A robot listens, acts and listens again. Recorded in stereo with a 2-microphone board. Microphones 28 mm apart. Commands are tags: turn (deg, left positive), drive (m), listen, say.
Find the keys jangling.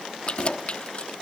<turn deg="40"/>
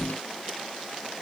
<listen/>
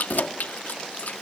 <turn deg="95"/>
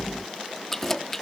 <turn deg="10"/>
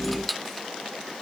<say>Facing the keys jangling, 1 to 2 m away.</say>